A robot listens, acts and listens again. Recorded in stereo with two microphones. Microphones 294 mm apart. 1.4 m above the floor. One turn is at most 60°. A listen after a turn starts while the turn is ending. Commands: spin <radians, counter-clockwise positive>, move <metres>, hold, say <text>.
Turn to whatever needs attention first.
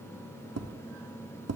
hold
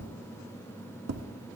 hold
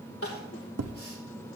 spin 0.87
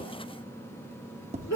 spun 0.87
spin 1.05
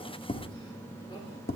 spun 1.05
spin 0.35
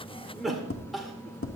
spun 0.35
say Found it: crying, straight ahead.